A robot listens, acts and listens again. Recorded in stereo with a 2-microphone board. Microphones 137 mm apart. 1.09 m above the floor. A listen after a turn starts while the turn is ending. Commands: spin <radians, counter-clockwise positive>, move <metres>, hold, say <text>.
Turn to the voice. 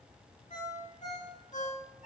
hold
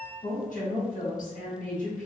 spin 1.22
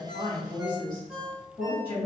spin 0.61
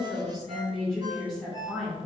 say Facing the woman speaking.